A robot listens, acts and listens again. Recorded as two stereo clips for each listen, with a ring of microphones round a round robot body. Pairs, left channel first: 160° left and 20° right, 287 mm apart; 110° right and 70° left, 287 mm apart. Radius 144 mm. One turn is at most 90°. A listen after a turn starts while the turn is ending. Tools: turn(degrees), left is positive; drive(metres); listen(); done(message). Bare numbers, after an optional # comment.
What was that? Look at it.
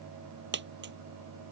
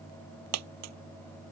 # The dropped coin: 30° left.
turn(30)
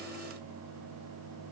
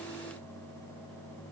done("I heard a dropped coin from this way, but can't make it out now.")